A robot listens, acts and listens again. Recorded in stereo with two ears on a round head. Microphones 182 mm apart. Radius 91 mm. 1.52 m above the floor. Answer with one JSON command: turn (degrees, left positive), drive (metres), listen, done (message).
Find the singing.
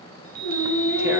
{"turn": 90}
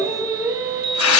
{"turn": -15}
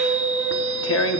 {"turn": -15}
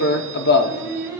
{"turn": -15}
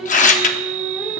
{"done": "Found it: singing, straight ahead."}